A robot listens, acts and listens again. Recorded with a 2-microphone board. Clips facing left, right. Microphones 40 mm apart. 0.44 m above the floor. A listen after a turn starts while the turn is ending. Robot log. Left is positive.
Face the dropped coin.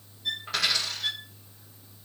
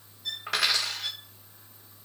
cmd yaw -90
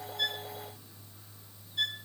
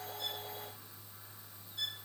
end: I heard a dropped coin from this way, but can't make it out now.